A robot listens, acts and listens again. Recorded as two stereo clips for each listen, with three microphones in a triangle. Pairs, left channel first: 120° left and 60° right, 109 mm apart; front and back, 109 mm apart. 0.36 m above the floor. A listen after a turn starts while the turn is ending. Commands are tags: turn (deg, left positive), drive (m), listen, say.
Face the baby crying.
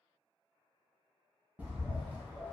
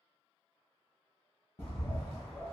<listen/>
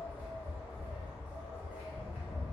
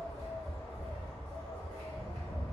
<listen/>
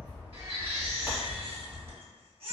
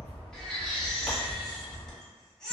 <turn deg="-85"/>
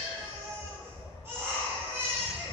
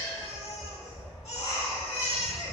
<say>Found it: a baby crying, straight ahead, under 1 m away.</say>